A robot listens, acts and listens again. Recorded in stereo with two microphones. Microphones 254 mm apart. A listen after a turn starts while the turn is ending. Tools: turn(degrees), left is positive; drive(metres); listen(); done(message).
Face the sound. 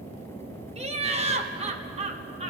turn(degrees=-25)
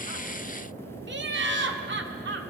turn(degrees=-125)
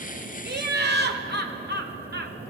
turn(degrees=-45)
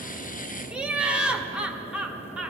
done("Found it: laughter, straight ahead, under 1 m away.")